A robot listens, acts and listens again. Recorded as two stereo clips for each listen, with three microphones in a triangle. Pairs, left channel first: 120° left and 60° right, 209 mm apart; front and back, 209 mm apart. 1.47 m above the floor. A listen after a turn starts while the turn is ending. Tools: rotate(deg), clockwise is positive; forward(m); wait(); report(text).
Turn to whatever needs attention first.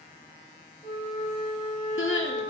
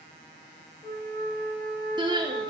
rotate(-110)
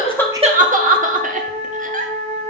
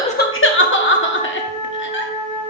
rotate(15)
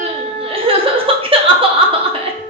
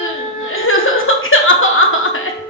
report("Found it: crying, straight ahead, under 1 m away.")